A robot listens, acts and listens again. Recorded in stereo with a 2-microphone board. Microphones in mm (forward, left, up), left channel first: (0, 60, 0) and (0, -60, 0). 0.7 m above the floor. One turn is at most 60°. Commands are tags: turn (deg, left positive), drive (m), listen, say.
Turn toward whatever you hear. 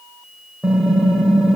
<turn deg="30"/>
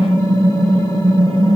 <turn deg="60"/>
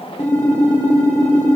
<turn deg="60"/>
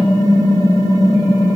<turn deg="35"/>
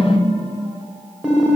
<turn deg="-10"/>
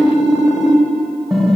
<say>Found it: typing on a keyboard, straight ahead.</say>